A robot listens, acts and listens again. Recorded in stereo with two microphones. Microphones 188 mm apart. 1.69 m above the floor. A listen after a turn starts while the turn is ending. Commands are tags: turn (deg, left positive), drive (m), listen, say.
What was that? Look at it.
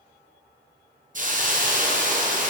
<turn deg="-45"/>
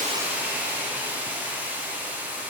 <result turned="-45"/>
<turn deg="-10"/>
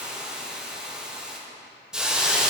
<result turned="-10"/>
<say>Facing the hiss, under 1 m away.</say>